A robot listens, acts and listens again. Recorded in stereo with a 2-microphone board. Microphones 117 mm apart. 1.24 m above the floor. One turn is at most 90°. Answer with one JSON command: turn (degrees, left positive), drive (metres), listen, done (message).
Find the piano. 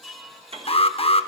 {"turn": -55}
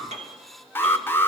{"turn": -70}
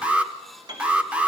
{"turn": -40}
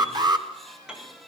{"done": "Found it: a piano, straight ahead."}